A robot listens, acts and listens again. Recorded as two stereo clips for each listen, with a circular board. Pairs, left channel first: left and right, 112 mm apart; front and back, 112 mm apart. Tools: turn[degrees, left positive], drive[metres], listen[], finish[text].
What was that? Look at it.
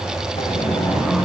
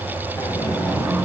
Thought: The sliding door: 65° left.
Action: turn[65]
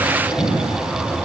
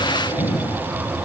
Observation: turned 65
Thought: The sliding door is now 25° left.
Action: turn[25]
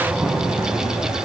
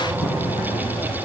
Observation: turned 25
Action: listen[]
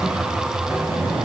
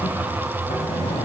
Thought: The sliding door is now 15° right.
Action: turn[-15]
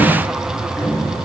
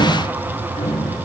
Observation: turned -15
Action: finish[Found it: a sliding door, straight ahead.]